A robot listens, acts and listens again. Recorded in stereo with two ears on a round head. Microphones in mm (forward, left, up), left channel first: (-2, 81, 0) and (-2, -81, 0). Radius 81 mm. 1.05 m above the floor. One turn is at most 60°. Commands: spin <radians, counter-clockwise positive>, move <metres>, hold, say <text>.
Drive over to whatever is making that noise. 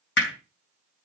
spin 1.05
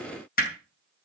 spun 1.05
spin 0.87
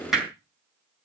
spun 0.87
move 1.0
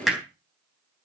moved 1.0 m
move 1.0
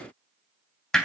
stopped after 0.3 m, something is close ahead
say Blocked. The hammering is further on, straight ahead.